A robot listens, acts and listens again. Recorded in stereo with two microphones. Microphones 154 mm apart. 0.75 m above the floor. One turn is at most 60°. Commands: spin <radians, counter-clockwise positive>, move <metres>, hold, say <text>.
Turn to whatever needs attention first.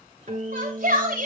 spin -1.05
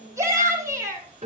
spin -0.35
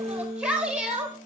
say Facing the shout, 2 to 4 m away.